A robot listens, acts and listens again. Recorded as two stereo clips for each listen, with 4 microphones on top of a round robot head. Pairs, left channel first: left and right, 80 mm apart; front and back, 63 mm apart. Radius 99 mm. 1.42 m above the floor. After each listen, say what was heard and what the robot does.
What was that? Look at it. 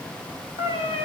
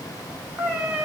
The cat meowing: 110° left. Turn 110° left.
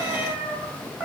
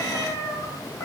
The cat meowing is now 20° right. Turn 20° right.
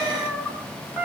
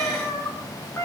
The cat meowing is now 10° right. Turn 10° right.
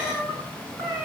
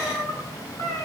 Found it: a cat meowing, straight ahead.